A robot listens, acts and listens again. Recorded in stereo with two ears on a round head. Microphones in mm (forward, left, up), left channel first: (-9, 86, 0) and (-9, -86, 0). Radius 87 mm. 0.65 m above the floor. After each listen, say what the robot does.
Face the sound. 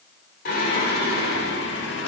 Turn 65° left.
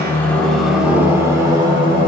Turn 30° right.
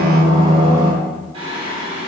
Turn 30° right.
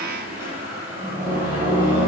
Turn 10° right.
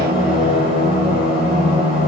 Facing the singing.